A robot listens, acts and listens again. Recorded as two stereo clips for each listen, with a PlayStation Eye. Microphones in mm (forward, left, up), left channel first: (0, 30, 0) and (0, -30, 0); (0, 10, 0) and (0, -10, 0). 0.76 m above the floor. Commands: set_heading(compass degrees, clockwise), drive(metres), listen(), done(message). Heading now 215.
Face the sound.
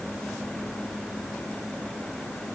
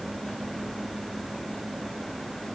listen()
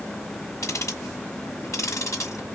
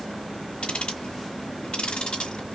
set_heading(155)
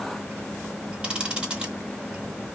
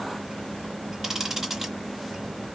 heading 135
set_heading(150)
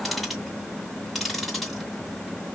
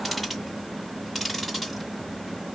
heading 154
done("Found it: ticking, straight ahead, 1 to 2 m away.")